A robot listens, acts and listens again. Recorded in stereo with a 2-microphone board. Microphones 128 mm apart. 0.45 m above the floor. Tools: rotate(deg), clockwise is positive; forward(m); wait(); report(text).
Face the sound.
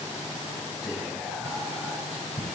rotate(-30)
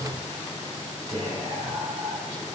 rotate(35)
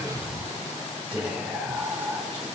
rotate(10)
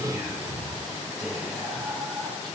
report("Facing the whispering, 2 to 4 m away.")